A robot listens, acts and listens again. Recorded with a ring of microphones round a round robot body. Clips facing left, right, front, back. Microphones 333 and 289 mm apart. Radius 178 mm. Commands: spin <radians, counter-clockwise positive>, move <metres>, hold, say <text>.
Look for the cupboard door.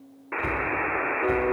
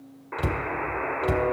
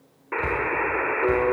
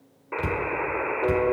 spin -2.01
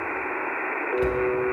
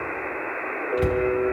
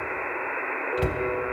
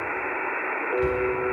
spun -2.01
spin -0.26
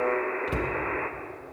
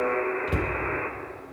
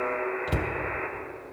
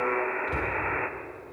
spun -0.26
say Facing the cupboard door.